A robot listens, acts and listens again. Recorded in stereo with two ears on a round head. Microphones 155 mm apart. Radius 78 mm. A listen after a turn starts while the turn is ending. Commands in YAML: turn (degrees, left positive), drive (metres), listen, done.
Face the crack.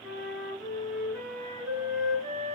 listen: true
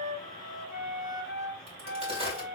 turn: -35
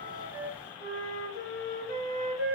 listen: true
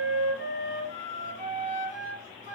done: "I heard a crack, but can't make it out now. It was about straight ahead or 110° right."